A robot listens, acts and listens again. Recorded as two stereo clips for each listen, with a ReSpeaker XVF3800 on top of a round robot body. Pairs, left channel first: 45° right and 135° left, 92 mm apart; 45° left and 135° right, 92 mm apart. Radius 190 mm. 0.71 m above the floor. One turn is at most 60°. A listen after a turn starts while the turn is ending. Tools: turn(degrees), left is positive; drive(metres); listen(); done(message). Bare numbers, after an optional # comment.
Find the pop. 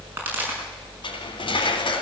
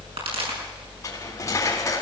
# The pop: 155° right.
turn(-60)
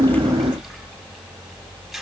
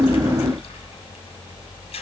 # Nothing new. It was at 95° right.
turn(-60)
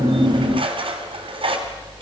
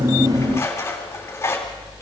# Nothing new. It was at 35° right.
turn(-35)
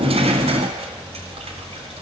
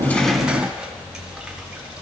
done("Facing where the pop came from. I can't hear it now.")